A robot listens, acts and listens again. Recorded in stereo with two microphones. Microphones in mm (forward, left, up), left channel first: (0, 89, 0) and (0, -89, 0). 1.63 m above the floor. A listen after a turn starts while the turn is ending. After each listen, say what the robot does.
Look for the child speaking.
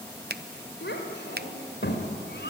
Turn 70° left.
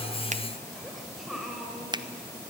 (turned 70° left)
Facing the child speaking, over 4 m away.